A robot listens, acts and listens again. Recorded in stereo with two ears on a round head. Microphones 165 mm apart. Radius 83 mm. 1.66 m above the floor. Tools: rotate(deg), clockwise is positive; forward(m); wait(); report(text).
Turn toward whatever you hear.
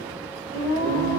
rotate(-20)
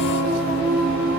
report("Facing the singing.")